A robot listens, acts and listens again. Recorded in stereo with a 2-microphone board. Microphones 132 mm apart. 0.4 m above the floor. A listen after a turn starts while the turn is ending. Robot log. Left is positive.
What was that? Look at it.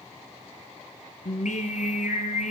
cmd yaw +90
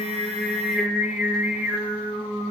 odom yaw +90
note: So it is at 20° right.
cmd yaw -20
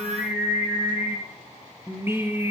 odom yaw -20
note: The singing is now 15° right.
cmd yaw -15
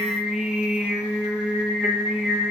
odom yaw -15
end: Facing the singing.